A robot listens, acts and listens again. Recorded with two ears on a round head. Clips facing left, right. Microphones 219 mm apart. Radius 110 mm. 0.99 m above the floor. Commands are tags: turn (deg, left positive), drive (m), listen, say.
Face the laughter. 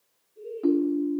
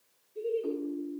<turn deg="-90"/>
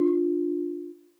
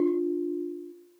<listen/>
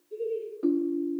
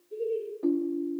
<say>Facing the laughter.</say>